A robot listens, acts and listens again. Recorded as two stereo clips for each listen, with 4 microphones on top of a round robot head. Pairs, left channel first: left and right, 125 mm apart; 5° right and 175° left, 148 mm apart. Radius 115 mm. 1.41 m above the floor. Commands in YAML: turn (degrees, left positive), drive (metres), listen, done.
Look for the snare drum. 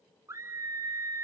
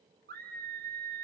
listen: true
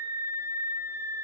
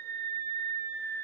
listen: true
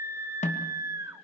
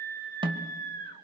turn: 115
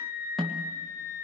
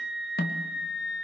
done: "Found it: a snare drum, straight ahead."